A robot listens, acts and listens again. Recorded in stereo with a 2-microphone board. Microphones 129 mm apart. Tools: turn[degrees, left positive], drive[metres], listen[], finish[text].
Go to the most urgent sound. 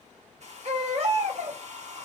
Thought: The baby crying: about 50° right or 130° right.
Action: turn[-50]
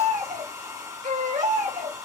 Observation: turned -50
Thought: So it is at 80° right.
Action: turn[-80]
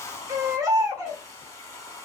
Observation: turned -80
Thought: The baby crying is now 25° right.
Action: turn[-25]
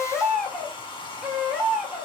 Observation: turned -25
Action: drive[1.0]
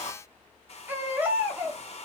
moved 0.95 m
Thought: The baby crying is now 15° right.
Action: turn[-15]
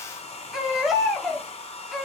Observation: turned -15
Action: drive[1.0]
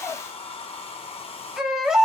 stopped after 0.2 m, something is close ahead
Action: finish[Arrived at the baby crying, straight ahead.]